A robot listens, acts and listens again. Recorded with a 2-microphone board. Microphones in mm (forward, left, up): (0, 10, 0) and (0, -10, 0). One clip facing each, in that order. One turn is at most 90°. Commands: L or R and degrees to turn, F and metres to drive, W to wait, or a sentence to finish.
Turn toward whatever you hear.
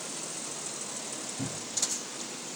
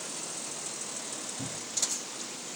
L90
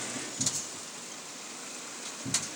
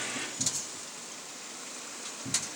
L10
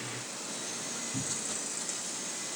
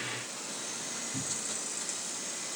Found it: a cupboard door, straight ahead.